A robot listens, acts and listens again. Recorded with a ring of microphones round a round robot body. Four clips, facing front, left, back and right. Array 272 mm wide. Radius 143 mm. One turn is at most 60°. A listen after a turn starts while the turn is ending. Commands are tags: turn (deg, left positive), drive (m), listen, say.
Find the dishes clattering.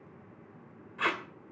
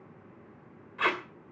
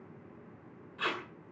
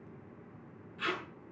<listen/>
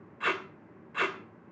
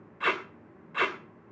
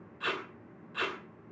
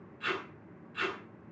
<listen/>
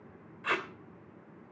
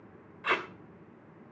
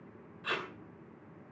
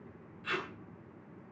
<say>I can't make out dishes clattering to turn to.</say>